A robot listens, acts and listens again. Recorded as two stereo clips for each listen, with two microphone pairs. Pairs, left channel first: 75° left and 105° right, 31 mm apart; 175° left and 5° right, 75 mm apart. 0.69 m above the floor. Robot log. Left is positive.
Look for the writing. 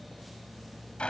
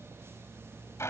cmd idle
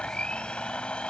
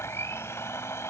cmd idle
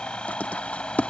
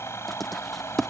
note: The writing: 85° left.
cmd yaw +85
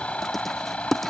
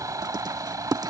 note: The writing is now 10° right.
cmd yaw -10
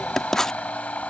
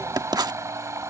end: Found it: writing, straight ahead.